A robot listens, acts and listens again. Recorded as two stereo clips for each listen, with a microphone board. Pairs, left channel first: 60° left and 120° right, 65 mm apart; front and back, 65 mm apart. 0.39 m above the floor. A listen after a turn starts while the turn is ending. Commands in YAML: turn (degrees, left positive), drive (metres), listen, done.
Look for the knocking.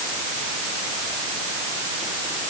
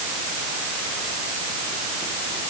listen: true
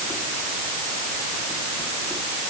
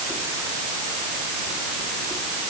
listen: true
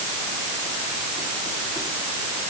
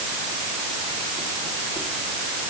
done: "I can't make out knocking."